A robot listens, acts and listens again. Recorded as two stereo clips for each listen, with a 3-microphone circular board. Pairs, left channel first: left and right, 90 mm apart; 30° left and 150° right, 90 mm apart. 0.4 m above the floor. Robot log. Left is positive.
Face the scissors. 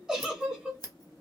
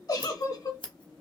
note: The scissors: 50° left.
cmd yaw +50
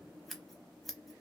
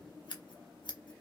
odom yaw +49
end: Found it: scissors, straight ahead, under 1 m away.